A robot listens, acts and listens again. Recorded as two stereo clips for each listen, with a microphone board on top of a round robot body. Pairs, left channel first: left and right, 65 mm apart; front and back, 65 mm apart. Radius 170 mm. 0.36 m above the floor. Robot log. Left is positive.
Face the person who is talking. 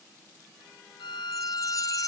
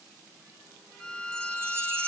cmd idle
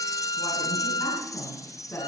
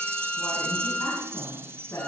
note: The woman speaking: 40° left.
cmd yaw +40
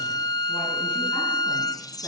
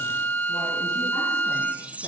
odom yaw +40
cmd idle
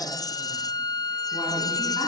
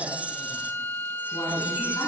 cmd idle
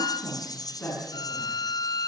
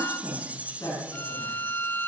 note: The woman speaking is now 30° left.
cmd yaw +30
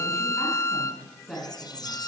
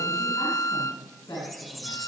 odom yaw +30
note: The woman speaking is now 10° left.
cmd yaw +10
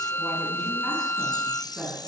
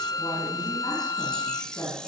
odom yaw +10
end: Facing the woman speaking.